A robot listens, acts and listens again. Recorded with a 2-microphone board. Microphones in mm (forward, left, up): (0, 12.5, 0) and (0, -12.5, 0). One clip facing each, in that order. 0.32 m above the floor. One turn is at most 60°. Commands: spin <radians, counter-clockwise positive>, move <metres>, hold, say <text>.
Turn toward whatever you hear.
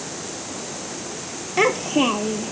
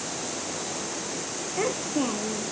spin 1.05
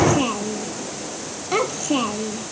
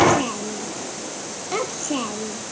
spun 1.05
spin 0.44
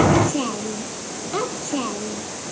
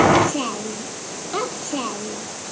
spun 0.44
say Found it: a child speaking, straight ahead.